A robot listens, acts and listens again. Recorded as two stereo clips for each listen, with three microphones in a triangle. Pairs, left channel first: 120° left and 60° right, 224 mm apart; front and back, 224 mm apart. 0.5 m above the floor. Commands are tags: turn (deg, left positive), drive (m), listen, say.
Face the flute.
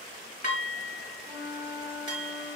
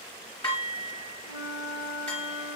<turn deg="35"/>
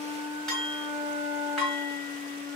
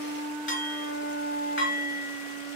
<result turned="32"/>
<say>Facing the flute.</say>